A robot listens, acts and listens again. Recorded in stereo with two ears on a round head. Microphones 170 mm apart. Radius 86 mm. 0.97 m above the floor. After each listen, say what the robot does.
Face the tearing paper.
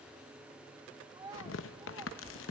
Turn 70° left.
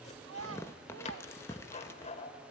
Turn 15° left.
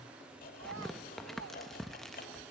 Found it: tearing paper, straight ahead, under 1 m away.